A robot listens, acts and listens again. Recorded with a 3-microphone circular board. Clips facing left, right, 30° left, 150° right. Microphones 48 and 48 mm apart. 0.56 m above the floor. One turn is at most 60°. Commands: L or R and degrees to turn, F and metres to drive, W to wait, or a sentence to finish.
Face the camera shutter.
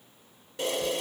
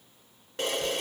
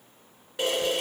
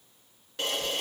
R45
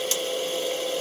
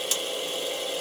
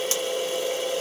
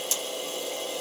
Facing the camera shutter.